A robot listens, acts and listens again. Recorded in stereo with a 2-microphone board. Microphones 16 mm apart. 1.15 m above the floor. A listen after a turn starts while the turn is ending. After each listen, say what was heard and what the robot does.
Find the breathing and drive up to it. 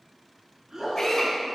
The breathing: about 35° right or 145° right. Turn 35° right.
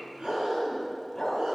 Keep listening.
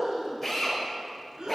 So it is at 110° right. Turn 110° right.
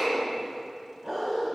Keep listening.
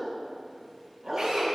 Keep listening.
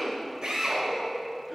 Facing where the breathing came from. I can't hear it now. I did not reach it.